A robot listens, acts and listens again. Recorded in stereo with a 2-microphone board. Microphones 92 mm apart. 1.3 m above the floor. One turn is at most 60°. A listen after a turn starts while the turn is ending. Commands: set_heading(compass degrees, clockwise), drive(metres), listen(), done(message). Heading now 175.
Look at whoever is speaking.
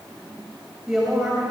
set_heading(205)
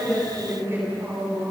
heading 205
set_heading(265)
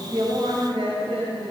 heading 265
set_heading(325)
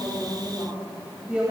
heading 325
set_heading(335)
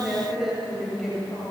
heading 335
done("Found it: a woman speaking, straight ahead.")